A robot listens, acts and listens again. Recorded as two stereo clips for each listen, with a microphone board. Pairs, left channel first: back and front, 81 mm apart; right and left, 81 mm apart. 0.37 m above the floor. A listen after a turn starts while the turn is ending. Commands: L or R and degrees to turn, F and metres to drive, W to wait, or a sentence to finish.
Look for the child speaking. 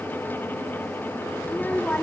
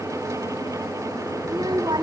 L110
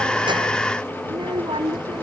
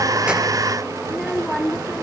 Found it: a child speaking, straight ahead.